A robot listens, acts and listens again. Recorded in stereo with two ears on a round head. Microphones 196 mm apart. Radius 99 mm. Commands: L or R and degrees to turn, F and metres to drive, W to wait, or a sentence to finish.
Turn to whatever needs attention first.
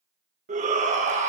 R35
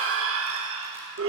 R110
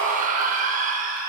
R35
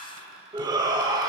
R20
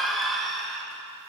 Found it: a shout, straight ahead.